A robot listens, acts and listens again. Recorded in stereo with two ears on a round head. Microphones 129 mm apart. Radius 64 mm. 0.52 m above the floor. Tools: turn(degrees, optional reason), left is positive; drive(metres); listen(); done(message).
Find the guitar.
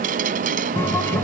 turn(degrees=15, reason="The guitar: about 15° left or 165° left.")
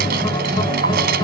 turn(degrees=150, reason="So it is at 150° left.")
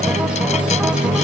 done("Facing the guitar.")